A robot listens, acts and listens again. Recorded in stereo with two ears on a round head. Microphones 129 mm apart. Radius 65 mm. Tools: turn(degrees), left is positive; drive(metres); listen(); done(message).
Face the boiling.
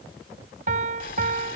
turn(degrees=60)
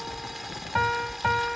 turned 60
done("Found it: boiling, straight ahead.")